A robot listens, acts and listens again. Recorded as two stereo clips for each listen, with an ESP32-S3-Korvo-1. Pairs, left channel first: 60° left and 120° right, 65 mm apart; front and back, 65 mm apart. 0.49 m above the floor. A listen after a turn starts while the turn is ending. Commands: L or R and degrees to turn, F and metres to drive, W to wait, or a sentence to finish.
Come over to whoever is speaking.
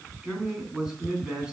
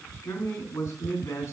R40
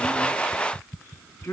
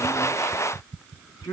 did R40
F1.0
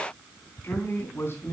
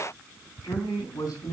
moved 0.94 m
F1.0
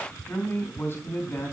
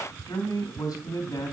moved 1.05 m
L10
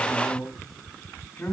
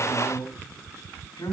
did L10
F1.0
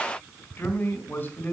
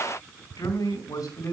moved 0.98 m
F1.0
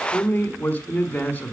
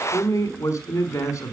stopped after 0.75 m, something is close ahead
Arrived at the man speaking, straight ahead.